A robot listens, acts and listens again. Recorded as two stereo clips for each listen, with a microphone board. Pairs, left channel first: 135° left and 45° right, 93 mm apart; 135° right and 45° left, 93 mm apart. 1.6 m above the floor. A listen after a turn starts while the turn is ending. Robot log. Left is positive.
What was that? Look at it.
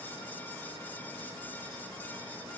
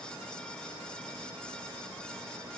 cmd idle
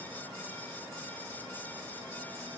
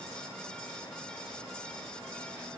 cmd idle
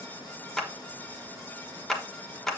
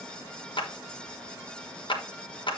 note: The clap: 140° right.
cmd yaw -140
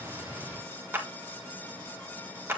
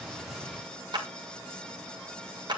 note: The clap is now 20° left.
cmd yaw +20
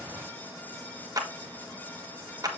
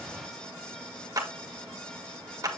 end: Facing the clap.